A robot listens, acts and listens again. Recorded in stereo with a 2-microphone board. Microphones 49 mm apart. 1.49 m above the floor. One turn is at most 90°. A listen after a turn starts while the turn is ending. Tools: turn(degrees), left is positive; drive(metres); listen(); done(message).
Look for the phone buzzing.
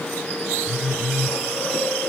turn(degrees=-30)
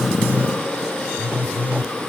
turn(degrees=-90)
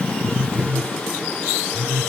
turn(degrees=-40)
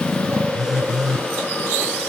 turn(degrees=-10)
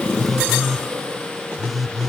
done("Found it: a phone buzzing, straight ahead, under 1 m away.")